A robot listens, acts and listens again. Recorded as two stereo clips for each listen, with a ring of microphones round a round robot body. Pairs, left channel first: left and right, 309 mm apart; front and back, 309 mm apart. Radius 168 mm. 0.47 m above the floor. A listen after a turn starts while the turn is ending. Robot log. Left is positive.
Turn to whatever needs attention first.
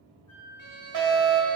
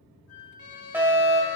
note: The fire alarm: 100° right.
cmd yaw -100
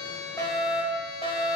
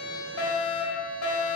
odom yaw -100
note: The fire alarm is now 20° left.
cmd yaw +20
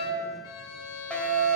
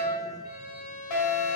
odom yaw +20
end: Facing the fire alarm.